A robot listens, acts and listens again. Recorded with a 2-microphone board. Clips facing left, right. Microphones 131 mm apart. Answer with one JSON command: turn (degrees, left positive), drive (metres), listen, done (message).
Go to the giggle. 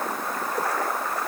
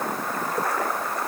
{"listen": true}
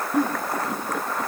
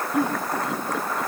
{"turn": 50}
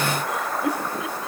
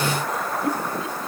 {"turn": 80}
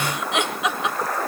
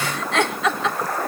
{"turn": 20}
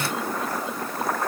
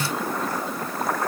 {"listen": true}
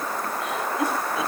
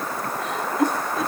{"drive": 1.0}
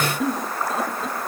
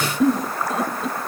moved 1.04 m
{"drive": 1.0}
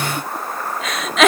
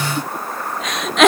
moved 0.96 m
{"drive": 1.0}
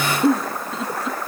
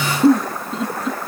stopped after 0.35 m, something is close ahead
{"done": "I am next to the giggle."}